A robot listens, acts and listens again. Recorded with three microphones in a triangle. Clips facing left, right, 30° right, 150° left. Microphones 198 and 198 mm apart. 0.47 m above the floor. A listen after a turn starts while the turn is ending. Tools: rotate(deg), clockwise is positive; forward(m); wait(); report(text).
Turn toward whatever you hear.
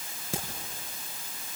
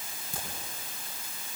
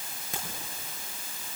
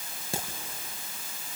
rotate(-90)
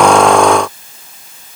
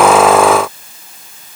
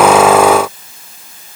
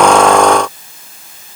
report("I heard a crack from this way, but can't make it out now.")